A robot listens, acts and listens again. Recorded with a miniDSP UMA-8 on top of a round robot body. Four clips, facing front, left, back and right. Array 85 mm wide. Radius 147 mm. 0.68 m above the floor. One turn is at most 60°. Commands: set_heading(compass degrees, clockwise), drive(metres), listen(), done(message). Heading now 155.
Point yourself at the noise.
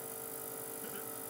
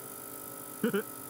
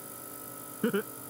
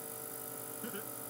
set_heading(95)
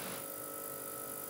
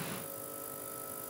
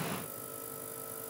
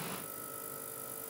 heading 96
set_heading(36)
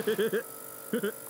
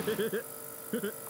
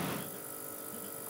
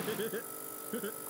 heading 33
set_heading(18)
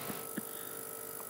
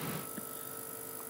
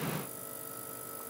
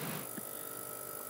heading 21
listen()
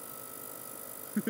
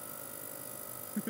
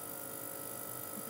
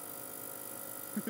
done("Found it: laughter, straight ahead.")